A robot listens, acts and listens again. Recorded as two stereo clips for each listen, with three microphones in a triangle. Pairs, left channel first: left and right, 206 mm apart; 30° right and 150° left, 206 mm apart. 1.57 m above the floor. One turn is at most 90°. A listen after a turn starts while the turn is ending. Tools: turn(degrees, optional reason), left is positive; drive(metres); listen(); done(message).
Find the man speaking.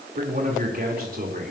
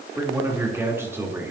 turn(degrees=-90, reason="The man speaking: 130° right.")
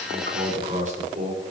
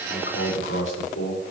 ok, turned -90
turn(degrees=-35, reason="The man speaking is now 35° right.")
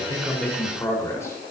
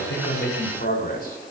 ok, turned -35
turn(degrees=15, reason="The man speaking is now 15° left.")
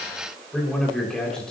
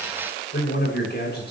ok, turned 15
done("Found it: a man speaking, straight ahead, over 4 m away.")